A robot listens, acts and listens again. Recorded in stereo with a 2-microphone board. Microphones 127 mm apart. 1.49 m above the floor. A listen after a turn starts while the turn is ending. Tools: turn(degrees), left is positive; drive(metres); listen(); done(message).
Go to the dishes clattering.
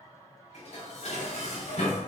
turn(degrees=65)
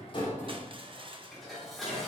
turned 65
drive(metres=1.0)
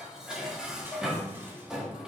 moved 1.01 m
drive(metres=1.0)
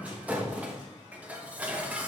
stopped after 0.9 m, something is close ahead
turn(degrees=-10)
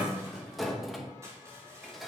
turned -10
done("I am next to the dishes clattering.")